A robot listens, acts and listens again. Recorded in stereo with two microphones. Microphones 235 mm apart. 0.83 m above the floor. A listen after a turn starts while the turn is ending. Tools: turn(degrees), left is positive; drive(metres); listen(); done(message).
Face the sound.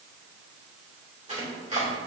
turn(degrees=-30)
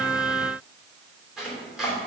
done("Found it: chopping, straight ahead, 2 to 4 m away.")